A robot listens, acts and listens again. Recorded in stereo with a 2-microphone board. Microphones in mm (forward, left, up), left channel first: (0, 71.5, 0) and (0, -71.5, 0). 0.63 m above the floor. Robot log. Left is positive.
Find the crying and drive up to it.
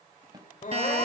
note: The crying: about 65° left or 115° left.
cmd yaw +65
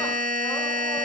cmd idle
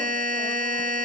cmd idle
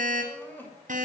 note: So it is at 15° left.
cmd yaw +15
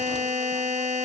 cmd idle
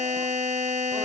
cmd idle
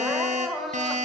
cmd fwd 1.0
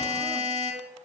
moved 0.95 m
cmd idle
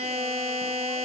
cmd idle
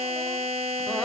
end: Facing where the crying came from. I can't hear it now. I did not reach it.